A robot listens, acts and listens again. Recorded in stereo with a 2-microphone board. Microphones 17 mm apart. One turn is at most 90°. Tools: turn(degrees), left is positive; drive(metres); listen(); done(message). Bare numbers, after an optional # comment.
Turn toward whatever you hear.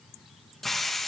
turn(30)
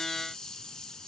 # So it is at 130° left.
turn(90)
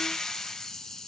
# The hiss is now 40° left.
turn(40)
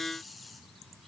listen()
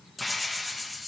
done("Found it: a hiss, straight ahead.")